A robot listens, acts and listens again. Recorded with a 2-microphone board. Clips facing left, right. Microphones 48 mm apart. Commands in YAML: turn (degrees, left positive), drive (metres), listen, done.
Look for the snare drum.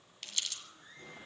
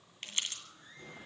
listen: true
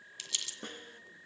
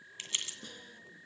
turn: 45
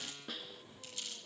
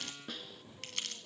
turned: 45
done: "Facing the snare drum, under 1 m away."